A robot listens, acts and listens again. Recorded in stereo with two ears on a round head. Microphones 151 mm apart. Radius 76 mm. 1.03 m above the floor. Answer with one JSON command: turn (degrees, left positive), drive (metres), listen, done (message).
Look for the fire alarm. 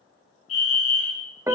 {"turn": 45}
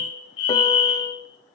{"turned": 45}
{"turn": 90}
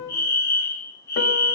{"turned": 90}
{"turn": 20}
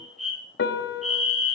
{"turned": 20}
{"done": "Facing the fire alarm."}